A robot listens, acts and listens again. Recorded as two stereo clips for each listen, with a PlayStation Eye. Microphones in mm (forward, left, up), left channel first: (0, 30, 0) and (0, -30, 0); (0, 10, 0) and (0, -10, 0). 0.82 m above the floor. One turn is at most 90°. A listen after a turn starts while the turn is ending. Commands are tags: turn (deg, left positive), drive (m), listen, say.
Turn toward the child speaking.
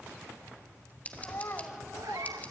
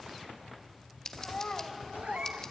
<turn deg="45"/>
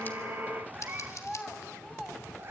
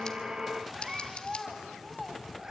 <say>Facing the child speaking, 2 to 4 m away.</say>